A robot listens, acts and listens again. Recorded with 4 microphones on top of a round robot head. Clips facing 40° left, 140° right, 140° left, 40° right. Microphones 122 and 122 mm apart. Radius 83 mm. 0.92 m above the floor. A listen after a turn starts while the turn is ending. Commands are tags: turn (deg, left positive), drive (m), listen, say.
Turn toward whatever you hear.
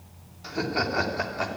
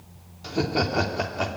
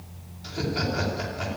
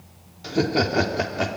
<turn deg="-60"/>
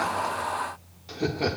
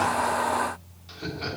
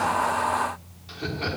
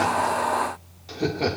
<say>Found it: laughter, straight ahead.</say>